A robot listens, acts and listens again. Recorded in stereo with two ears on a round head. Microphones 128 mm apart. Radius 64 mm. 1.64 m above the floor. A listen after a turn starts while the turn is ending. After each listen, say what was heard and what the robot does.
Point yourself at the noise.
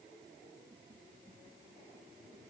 Keep listening.
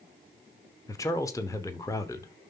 The man speaking: about 25° left or 155° left. Turn 25° left.
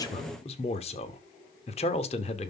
So it is at 135° left. Turn 135° left.
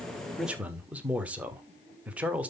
The man speaking is now 10° right. Turn 10° right.
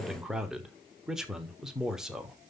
Facing the man speaking, 1 to 2 m away.